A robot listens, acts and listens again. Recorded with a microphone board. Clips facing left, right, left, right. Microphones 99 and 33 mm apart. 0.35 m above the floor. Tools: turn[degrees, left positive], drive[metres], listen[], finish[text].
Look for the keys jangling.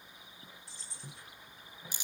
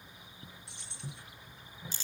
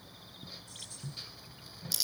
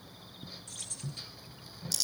Thought: The keys jangling: about 75° right or 105° right.
Action: turn[-75]
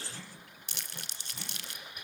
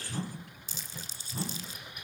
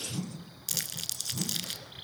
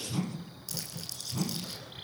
Action: listen[]
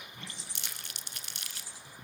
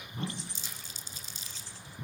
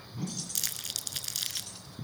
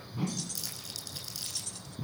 Thought: So it is at 10° left.
Action: turn[10]
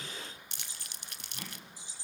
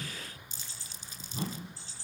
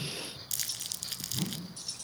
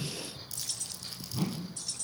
Thought: The keys jangling is now 15° left.
Action: turn[15]
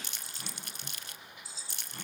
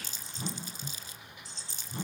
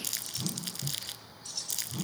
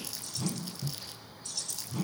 Action: finish[Found it: keys jangling, straight ahead, 2 to 4 m away.]